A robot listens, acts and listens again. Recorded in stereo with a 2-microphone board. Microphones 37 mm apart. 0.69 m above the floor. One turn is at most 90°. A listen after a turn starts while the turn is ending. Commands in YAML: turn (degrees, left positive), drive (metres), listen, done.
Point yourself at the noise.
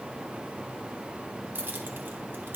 turn: -70
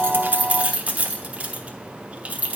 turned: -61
turn: -40
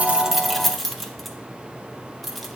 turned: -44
done: "Facing the keys jangling, under 1 m away."